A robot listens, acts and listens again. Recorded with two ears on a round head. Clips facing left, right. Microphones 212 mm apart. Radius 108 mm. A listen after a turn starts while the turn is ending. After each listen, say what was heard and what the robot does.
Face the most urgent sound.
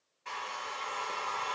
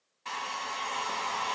Keep listening.
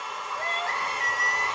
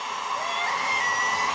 The crying: about 15° right or 165° right. Turn 15° right.
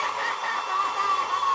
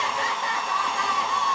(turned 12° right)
So it is at 155° right. Turn 155° right.
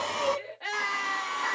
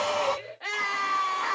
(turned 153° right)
Found it: crying, straight ahead.